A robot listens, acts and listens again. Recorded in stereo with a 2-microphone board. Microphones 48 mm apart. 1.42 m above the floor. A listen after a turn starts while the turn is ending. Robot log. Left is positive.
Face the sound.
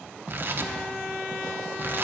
note: The tearing paper: about 45° right or 135° right.
cmd yaw -45
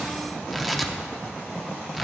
end: Found it: tearing paper, straight ahead.